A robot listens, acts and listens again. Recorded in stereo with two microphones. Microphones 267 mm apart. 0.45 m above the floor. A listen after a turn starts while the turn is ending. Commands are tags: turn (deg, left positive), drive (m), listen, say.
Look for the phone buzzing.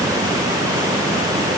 <listen/>
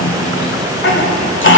<listen/>
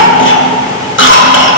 <say>I can't make out a phone buzzing, only a cough.</say>